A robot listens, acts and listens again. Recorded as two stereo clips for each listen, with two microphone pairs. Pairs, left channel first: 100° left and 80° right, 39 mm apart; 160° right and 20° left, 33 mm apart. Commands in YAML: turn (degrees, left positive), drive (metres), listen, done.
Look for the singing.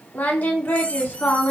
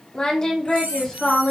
turn: 140
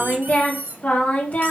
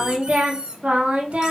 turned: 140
turn: 55
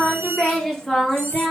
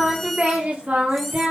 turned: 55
turn: 25
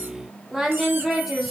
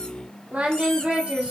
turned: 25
done: "Facing the singing."